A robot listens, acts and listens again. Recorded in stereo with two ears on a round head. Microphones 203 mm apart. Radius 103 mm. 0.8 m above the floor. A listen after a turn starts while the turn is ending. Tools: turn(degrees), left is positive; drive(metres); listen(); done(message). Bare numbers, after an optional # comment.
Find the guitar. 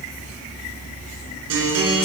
turn(-90)
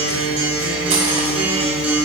done("Found it: a guitar, straight ahead.")